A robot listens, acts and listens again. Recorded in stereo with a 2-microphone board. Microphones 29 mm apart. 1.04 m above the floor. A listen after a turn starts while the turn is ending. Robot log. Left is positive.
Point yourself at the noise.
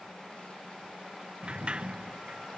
note: The sliding door: about 35° right or 145° right.
cmd yaw -35
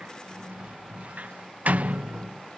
note: So it is at 95° right.
cmd yaw -95
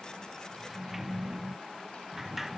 note: The sliding door is now 10° right.
cmd yaw -10
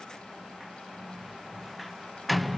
end: Facing the sliding door.